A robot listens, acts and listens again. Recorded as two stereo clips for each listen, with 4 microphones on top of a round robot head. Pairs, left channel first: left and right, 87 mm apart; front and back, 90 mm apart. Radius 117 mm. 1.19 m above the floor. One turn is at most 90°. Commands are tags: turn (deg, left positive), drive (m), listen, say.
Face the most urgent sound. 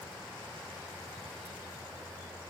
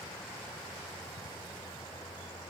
<listen/>
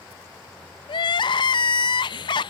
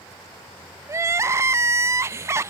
<turn deg="90"/>
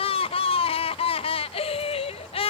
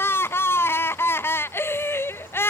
<turn deg="65"/>
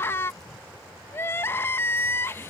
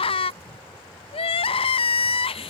<turn deg="20"/>
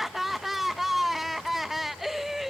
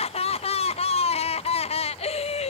<say>Facing the crying.</say>